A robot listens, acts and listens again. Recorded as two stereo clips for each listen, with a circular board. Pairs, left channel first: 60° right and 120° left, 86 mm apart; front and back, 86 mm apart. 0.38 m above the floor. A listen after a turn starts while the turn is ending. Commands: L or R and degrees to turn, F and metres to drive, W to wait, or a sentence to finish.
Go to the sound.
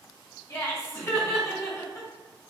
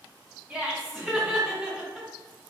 R105
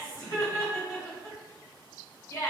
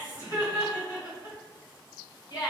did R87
R15
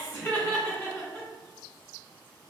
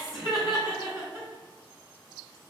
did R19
F1.0
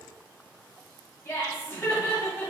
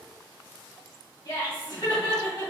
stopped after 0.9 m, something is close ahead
R10
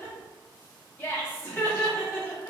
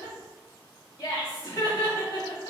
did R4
Arrived at the laughter, straight ahead.